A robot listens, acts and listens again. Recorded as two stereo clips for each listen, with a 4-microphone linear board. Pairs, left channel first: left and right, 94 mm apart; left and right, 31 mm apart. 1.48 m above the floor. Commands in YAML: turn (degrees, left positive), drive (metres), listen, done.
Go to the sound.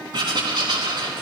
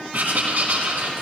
turn: -55
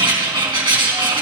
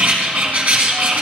turn: -70
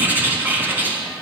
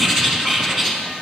turn: -20
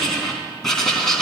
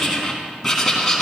drive: 1.0
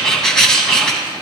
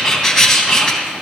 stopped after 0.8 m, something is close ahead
turn: 10
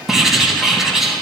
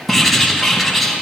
done: "Blocked. The writing is further on, straight ahead."